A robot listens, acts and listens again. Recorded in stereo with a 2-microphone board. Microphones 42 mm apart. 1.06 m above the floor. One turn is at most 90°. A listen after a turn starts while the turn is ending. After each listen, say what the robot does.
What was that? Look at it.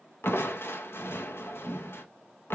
Turn 70° left.
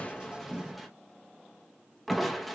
Found it: crushing, straight ahead, under 1 m away.